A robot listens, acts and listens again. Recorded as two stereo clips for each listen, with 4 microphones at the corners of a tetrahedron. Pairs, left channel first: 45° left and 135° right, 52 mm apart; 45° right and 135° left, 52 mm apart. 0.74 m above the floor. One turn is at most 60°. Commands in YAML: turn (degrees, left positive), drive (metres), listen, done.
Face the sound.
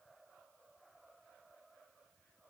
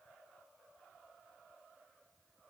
listen: true
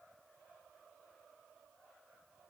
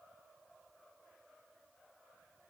listen: true
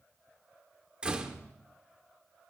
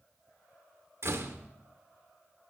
turn: 60
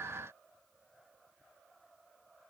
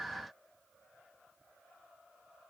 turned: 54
turn: 60
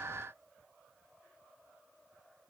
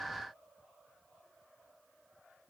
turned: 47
turn: 55
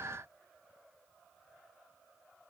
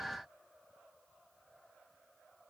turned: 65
turn: -10
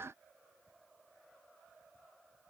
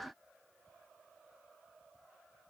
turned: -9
done: "I heard a door slam from this way, but can't make it out now."